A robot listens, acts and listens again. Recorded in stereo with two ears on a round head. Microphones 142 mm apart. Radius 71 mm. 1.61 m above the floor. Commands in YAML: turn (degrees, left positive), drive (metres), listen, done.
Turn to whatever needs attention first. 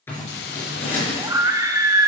turn: -20
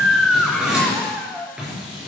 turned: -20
done: "Facing the scream."